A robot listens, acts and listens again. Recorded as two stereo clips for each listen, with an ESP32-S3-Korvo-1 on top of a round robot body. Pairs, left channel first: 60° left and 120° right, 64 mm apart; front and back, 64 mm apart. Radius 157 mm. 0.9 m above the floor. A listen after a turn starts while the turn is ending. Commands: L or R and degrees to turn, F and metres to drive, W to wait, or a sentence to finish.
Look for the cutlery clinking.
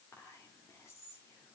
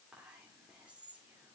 W
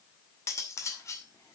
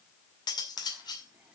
L10
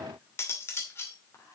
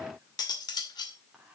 Facing the cutlery clinking.